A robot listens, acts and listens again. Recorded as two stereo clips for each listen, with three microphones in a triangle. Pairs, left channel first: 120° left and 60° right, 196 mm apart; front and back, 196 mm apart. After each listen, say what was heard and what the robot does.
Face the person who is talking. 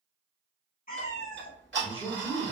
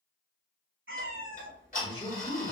The man speaking: 65° left. Turn 65° left.
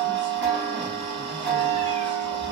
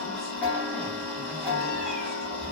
Keep listening.
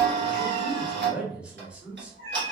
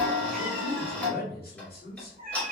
The man speaking is now 25° left. Turn 25° left.
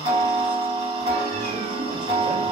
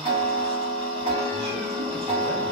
Keep listening.
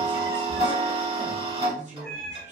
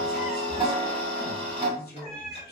The man speaking is now 15° right. Turn 15° right.
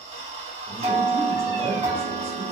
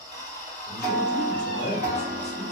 Keep listening.
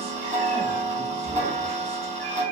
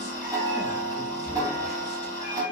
Keep listening.
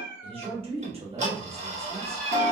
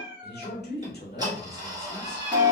Found it: a man speaking, straight ahead, 1 to 2 m away.